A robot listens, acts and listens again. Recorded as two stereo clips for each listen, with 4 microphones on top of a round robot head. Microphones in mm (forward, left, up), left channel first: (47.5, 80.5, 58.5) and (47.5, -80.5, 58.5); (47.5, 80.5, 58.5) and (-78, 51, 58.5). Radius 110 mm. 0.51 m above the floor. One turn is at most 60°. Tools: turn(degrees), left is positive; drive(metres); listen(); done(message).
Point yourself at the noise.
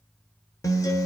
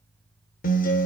turn(degrees=20)
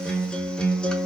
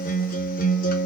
done("Found it: a guitar, straight ahead, under 1 m away.")